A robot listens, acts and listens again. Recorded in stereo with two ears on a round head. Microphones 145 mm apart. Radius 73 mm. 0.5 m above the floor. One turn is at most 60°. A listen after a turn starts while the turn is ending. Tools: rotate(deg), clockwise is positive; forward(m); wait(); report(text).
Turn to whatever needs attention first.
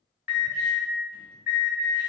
rotate(30)
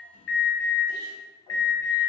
rotate(-25)
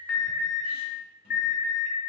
rotate(10)
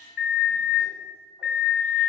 report("Facing the alarm, 2 to 4 m away.")